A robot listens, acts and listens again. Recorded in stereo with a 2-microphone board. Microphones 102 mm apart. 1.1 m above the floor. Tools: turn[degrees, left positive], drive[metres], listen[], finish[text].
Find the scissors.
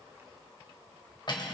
Action: listen[]
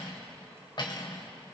Action: listen[]
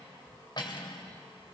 Action: finish[I can't make out scissors, only cutlery clinking.]